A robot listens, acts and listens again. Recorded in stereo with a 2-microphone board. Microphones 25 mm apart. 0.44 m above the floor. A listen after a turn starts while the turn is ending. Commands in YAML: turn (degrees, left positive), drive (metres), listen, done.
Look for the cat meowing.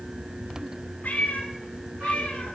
turn: 60
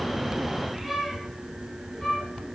listen: true
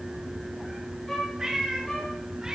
turn: -25
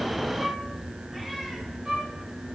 listen: true
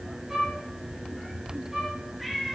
done: "Found it: a cat meowing, straight ahead, over 4 m away."